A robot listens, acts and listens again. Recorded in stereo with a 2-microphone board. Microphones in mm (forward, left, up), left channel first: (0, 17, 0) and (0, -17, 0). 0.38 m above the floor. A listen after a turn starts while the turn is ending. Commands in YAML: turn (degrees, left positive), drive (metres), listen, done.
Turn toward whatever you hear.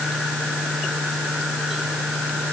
listen: true
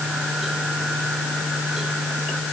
listen: true
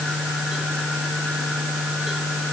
done: "I can't make out anything to turn to."